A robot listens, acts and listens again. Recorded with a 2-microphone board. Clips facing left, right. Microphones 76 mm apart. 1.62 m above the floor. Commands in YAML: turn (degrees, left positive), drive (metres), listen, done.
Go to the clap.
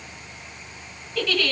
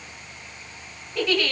listen: true
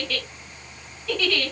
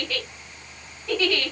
listen: true
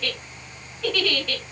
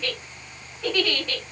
done: "I can't make out a clap, only a giggle."